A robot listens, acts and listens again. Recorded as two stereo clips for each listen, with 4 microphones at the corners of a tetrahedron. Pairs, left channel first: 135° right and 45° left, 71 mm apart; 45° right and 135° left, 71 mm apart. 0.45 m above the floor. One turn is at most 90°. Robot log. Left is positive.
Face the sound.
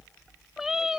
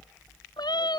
note: The cat meowing: 35° right.
cmd yaw -35
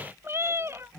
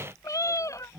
end: Found it: a cat meowing, straight ahead.